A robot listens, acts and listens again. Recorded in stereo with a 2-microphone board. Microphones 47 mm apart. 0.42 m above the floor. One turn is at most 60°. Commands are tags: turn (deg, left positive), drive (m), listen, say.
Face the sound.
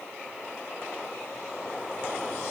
<listen/>
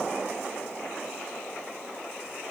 <listen/>
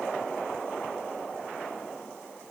<say>I can't make out anything.</say>